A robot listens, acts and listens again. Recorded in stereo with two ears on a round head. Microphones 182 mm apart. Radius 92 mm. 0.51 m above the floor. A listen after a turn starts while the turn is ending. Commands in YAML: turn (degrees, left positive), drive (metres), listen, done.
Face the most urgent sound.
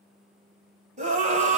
turn: -40
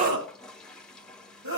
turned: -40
turn: -100
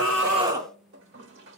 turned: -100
turn: -20
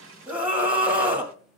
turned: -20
done: "Facing the scream, 2 to 4 m away."